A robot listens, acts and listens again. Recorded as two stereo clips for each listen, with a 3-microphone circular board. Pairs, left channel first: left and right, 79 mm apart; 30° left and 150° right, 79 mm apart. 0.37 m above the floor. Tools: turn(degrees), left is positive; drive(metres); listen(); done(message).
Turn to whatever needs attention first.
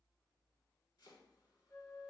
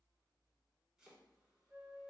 listen()
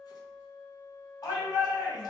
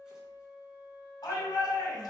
turn(degrees=60)
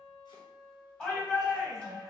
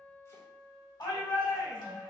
turn(degrees=10)
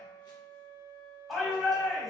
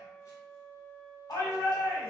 done("Facing the shout, 1 to 2 m away.")